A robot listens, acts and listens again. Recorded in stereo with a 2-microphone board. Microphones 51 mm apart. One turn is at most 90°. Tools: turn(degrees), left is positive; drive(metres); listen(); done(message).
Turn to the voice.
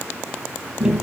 listen()
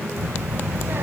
turn(degrees=-55)
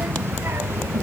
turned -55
turn(degrees=-60)
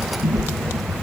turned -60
done("Found it: a child speaking, straight ahead.")